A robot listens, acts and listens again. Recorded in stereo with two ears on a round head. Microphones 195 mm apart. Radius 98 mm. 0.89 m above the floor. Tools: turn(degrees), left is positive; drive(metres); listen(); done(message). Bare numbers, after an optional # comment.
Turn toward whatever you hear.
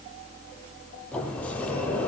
turn(30)
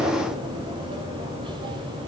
# So it is at 20° right.
turn(-20)
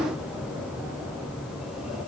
done("Facing the sliding door.")